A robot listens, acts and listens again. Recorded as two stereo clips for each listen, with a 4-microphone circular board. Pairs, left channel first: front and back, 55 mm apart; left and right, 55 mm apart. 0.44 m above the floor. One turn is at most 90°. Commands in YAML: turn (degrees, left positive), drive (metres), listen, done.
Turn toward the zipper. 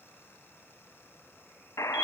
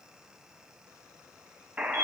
listen: true
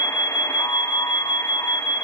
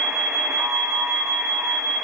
listen: true
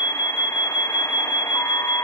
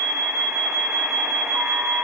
done: "I can't make out a zipper, only an alarm and a buzzer."